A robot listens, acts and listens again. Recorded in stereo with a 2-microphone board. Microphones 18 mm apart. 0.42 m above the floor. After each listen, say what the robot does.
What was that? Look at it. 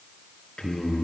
Turn 90° left.
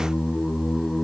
Turn 10° right.
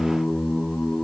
Found it: singing, straight ahead, over 4 m away.